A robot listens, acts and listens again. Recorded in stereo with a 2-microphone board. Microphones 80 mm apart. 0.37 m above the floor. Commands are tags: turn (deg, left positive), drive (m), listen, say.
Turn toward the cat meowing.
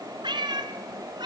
<turn deg="-70"/>
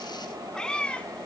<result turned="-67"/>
<turn deg="15"/>
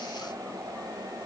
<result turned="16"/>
<listen/>
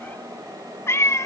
<turn deg="40"/>
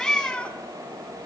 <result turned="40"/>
<turn deg="15"/>
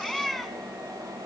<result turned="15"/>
<say>Facing the cat meowing.</say>